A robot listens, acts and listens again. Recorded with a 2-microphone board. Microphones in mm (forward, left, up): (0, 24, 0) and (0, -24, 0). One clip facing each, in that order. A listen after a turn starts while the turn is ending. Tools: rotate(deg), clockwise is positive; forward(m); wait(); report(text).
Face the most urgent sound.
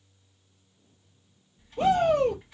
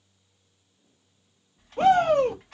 rotate(60)
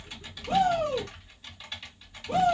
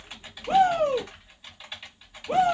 rotate(45)
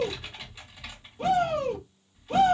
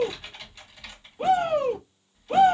rotate(20)
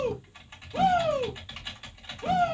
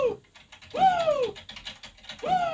report("Facing the shout, 1 to 2 m away.")